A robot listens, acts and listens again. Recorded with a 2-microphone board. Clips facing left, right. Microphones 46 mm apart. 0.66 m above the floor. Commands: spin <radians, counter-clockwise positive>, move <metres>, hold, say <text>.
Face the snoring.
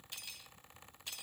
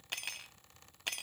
hold
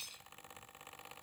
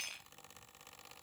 hold
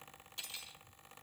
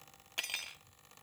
say I can't make out snoring, only cutlery clinking.